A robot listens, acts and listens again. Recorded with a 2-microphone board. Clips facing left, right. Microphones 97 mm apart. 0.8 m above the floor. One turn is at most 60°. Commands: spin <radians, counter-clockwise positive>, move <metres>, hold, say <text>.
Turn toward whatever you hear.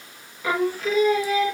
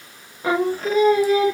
spin -0.70
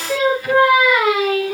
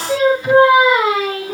spin -0.61
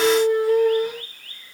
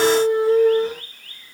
spin -0.61
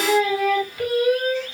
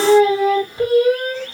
spin -0.52
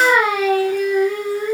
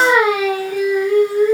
say Found it: singing, straight ahead.